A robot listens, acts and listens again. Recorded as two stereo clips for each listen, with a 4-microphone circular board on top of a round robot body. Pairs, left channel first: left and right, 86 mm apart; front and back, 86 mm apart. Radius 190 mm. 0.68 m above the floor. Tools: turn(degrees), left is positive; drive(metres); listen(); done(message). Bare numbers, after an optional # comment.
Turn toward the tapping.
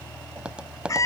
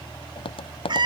# The tapping: 10° right.
turn(-10)
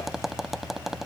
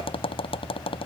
done("Facing the tapping.")